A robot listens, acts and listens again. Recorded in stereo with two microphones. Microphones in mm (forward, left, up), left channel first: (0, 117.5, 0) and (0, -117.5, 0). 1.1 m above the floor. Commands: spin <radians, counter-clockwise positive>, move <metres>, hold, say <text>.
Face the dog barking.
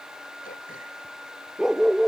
spin -0.52
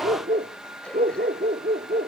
spin -2.44
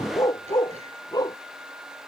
spin 0.26
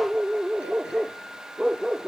say Facing the dog barking.